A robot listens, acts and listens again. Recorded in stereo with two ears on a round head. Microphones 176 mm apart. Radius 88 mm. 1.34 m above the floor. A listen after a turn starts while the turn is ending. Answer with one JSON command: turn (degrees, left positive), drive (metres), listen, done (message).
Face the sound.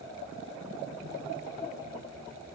{"listen": true}
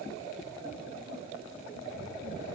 {"listen": true}
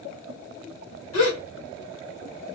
{"turn": 90}
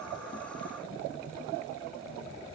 {"done": "Facing where the gasp came from. I can't hear it now."}